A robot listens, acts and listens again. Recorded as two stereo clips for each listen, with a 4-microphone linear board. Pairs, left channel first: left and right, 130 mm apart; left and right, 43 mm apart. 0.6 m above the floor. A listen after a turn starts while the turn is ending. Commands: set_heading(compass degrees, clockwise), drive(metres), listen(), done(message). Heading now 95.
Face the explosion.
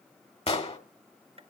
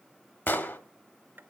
set_heading(45)
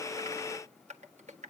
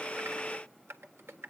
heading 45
listen()
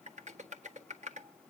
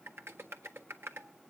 done("I heard an explosion, but can't make it out now. It was about straight ahead or 80° left.")